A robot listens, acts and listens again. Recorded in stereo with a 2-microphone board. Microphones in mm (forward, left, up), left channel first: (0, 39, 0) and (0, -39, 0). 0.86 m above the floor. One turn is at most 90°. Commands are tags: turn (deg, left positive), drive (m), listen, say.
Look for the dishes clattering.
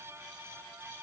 <listen/>
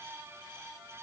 <listen/>
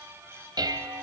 <turn deg="-60"/>
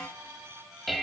<say>Facing the dishes clattering, 2 to 4 m away.</say>